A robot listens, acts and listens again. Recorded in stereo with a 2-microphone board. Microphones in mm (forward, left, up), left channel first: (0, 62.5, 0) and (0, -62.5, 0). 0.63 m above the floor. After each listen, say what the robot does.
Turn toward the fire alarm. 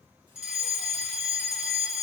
Turn 30° right.
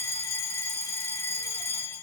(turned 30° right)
Turn 20° left.
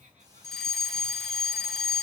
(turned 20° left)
Found it: a fire alarm, straight ahead, 2 to 4 m away.